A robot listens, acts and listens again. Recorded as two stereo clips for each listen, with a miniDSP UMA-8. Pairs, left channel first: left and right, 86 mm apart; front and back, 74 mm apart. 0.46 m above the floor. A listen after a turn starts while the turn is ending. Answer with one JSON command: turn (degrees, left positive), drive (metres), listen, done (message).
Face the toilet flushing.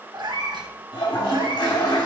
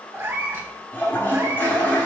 {"turn": 60}
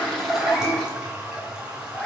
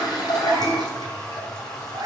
{"turn": -10}
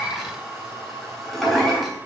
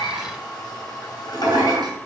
{"done": "Found it: a toilet flushing, straight ahead, 2 to 4 m away."}